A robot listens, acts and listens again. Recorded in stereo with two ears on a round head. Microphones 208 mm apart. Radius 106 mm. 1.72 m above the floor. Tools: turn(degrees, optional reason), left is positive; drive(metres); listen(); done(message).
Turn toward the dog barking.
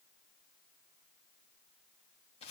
listen()
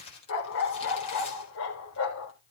turn(degrees=55, reason="The dog barking: about 55° left or 125° left.")
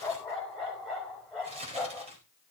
done("Facing the dog barking.")